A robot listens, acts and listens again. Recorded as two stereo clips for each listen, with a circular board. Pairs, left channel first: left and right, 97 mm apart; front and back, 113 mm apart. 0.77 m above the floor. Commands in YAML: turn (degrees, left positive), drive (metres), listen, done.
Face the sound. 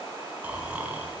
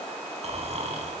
turn: -165
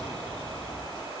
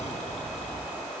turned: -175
turn: 10
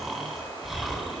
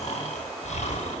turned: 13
done: "Facing the snoring, over 4 m away."